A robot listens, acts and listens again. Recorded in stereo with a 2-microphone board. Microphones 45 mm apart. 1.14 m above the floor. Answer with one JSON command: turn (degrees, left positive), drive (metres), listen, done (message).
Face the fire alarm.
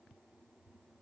{"listen": true}
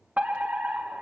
{"turn": -40}
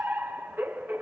{"turn": -90}
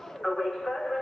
{"turn": 15}
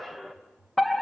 {"done": "Facing the fire alarm."}